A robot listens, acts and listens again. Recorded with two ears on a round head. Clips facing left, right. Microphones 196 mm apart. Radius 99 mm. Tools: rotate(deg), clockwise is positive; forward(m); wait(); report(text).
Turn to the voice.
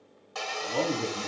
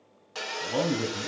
rotate(90)
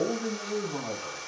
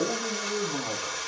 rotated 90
rotate(-10)
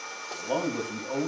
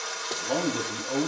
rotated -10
report("Facing the man speaking.")